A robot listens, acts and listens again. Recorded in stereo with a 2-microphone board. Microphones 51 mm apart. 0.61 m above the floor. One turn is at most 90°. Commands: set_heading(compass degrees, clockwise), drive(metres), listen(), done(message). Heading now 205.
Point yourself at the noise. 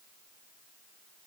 listen()
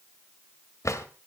set_heading(115)
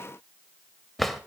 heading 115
done("Found it: a drawer, straight ahead.")